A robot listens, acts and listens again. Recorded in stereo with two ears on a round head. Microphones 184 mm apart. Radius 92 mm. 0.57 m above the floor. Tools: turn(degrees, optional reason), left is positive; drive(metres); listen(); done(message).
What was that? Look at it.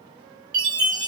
turn(degrees=-30, reason="The chime: about 30° right or 150° right.")
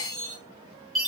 done("Found it: a chime, straight ahead.")